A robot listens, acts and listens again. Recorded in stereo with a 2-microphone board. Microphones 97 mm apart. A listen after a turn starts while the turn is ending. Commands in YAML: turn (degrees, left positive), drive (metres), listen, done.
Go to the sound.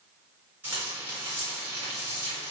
turn: -20
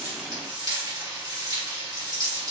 turn: -135
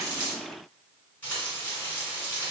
turn: 20
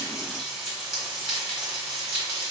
drive: 1.0
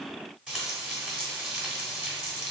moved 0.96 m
turn: -10
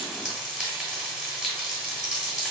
drive: 1.0
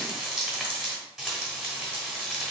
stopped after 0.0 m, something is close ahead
done: "Arrived at the frying, straight ahead."